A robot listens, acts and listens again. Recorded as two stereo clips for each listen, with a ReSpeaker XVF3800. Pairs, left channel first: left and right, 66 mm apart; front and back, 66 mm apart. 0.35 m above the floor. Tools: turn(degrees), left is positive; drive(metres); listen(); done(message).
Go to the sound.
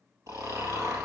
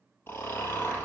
turn(degrees=-55)
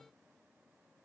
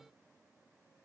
listen()
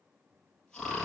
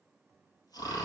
turn(degrees=10)
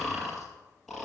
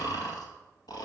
drive(metres=1.0)
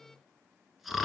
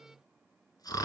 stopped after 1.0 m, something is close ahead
done("Arrived at the snoring, straight ahead.")